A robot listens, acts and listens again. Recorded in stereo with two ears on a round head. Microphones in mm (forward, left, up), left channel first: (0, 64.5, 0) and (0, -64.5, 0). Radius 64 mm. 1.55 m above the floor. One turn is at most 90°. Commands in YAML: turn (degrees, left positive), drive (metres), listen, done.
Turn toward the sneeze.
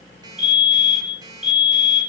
listen: true
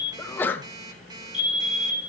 turn: 30
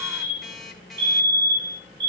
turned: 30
listen: true
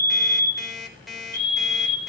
done: "I heard a sneeze, but can't make it out now. It was about 15° right or 135° left."